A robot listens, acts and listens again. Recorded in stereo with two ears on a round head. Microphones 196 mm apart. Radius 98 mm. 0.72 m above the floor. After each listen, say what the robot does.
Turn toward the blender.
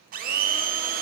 Turn 40° right.
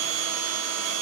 Turn 100° right.
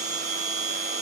Turn 35° right.
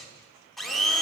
Facing the blender, 1 to 2 m away.